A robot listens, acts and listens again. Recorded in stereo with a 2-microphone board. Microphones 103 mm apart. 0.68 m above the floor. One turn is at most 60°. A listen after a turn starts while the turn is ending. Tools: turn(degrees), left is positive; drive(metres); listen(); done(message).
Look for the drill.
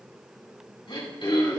listen()
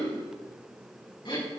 listen()
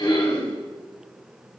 done("I can't make out a drill to turn to.")